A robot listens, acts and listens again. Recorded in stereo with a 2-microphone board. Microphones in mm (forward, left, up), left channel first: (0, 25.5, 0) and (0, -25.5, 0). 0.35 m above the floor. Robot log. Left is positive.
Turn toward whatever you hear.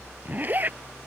note: The zipper: about 35° right or 145° right.
cmd yaw -35
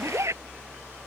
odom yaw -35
note: So it is at 110° right.
cmd yaw -110
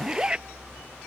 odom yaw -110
note: The zipper is now 20° right.
cmd yaw -20
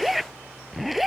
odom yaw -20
end: Found it: a zipper, straight ahead.